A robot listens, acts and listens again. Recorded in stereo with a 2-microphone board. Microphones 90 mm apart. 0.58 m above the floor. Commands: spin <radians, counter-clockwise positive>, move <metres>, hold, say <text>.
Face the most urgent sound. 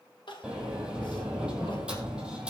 spin 1.13
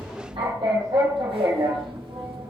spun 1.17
hold
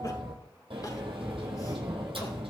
hold
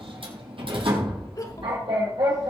spin 0.79
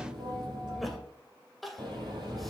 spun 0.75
say Facing the crying, 1 to 2 m away.